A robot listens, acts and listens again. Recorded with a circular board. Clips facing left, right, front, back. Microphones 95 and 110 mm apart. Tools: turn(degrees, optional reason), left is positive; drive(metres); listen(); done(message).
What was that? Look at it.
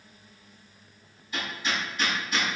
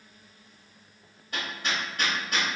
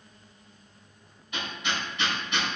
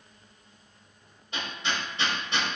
turn(degrees=-125, reason="The hammering: 125° right.")
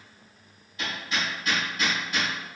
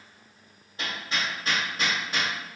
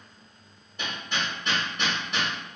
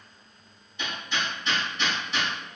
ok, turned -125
turn(degrees=-35, reason="The hammering is now 35° right.")
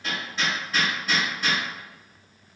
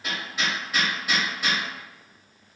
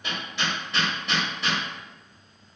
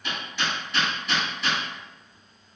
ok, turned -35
turn(degrees=-10, reason="The hammering is now 10° right.")
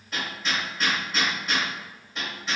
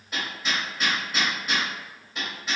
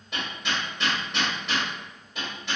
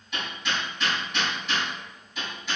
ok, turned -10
done("Facing the hammering.")